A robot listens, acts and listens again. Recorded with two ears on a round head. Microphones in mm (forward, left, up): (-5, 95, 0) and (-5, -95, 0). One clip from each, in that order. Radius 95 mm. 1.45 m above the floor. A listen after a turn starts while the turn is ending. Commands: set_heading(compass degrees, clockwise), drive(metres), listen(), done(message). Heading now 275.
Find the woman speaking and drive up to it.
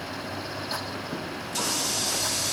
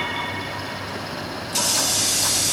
listen()
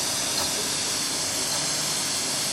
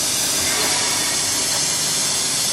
listen()
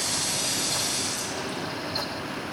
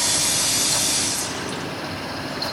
done("I can't make out a woman speaking to turn to.")